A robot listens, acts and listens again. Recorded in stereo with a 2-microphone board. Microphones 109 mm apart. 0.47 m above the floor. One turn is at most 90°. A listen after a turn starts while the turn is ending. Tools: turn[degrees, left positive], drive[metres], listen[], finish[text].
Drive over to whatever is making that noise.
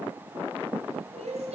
Action: turn[-90]
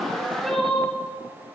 Action: drive[1.0]
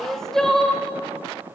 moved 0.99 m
Action: drive[1.0]
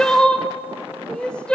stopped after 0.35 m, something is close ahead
Thought: The crying is now 10° left.
Action: turn[10]
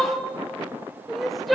Action: finish[Arrived at the crying, straight ahead.]